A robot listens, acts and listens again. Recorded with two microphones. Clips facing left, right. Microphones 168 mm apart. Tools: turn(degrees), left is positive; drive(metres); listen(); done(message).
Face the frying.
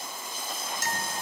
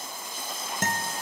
listen()
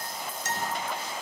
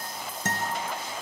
listen()
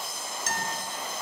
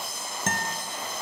done("I can't make out frying to turn to.")